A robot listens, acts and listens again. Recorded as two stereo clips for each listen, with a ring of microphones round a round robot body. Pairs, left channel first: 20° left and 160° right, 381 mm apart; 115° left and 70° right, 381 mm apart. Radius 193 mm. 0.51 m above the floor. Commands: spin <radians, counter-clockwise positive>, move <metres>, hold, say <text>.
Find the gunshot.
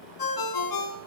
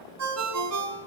hold
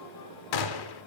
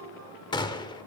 spin 0.61
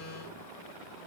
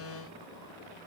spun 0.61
say I heard a gunshot from this way, but can't make it out now.